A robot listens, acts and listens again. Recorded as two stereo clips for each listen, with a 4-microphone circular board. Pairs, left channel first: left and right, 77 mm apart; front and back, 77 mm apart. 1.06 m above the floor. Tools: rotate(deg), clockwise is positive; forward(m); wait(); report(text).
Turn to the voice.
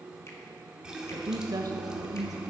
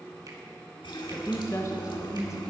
rotate(50)
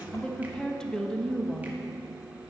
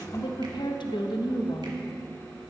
rotate(-10)
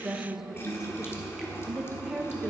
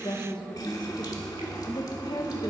report("Found it: a woman speaking, straight ahead.")